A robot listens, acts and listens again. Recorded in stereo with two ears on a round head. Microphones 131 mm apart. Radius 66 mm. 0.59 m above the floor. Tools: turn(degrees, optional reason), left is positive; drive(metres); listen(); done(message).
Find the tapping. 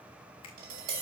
turn(degrees=-70, reason="The tapping: about 70° right or 110° right.")
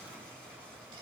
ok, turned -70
listen()
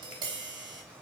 turn(degrees=-35, reason="So it is at 35° right.")
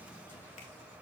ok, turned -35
listen()
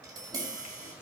turn(degrees=-25, reason="The tapping is now 25° right.")
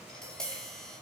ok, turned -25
done("Found it: tapping, straight ahead.")